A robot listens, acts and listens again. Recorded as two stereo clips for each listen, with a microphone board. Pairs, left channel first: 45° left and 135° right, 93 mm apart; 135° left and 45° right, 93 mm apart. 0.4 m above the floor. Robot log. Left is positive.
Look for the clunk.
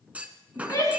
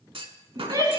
note: The clunk: 60° right.
cmd yaw -60
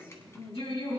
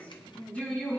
end: I heard a clunk from this way, but can't make it out now.